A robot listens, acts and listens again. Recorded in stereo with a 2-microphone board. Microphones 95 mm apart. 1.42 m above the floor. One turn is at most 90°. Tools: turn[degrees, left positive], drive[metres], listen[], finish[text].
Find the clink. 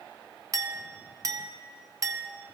Thought: The clink: about 35° right or 145° right.
Action: turn[-35]
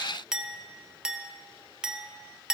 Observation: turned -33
Thought: So it is at 10° right.
Action: turn[-10]
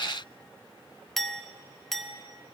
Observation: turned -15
Action: finish[Found it: a clink, straight ahead, under 1 m away.]